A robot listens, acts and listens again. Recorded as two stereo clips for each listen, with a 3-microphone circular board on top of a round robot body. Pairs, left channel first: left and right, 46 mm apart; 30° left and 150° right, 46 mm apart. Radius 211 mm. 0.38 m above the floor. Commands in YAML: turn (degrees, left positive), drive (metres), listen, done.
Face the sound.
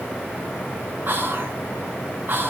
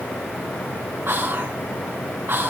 turn: -125
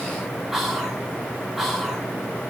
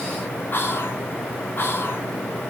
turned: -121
done: "Found it: whispering, straight ahead."